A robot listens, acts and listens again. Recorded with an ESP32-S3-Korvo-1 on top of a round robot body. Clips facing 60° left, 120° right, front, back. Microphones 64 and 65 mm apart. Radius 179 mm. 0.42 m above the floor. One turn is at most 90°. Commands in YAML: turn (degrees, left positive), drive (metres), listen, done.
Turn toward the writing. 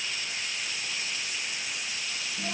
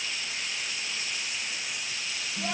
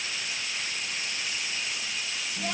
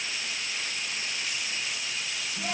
listen: true
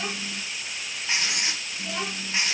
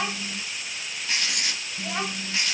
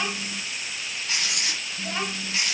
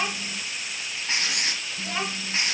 turn: 90
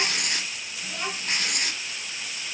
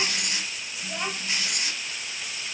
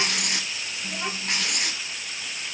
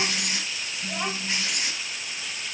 turn: 25
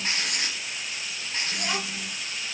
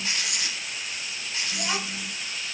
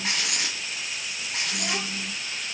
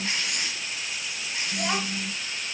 turn: 15
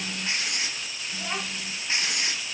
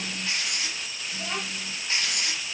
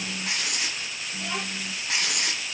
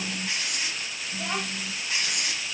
done: "Found it: writing, straight ahead."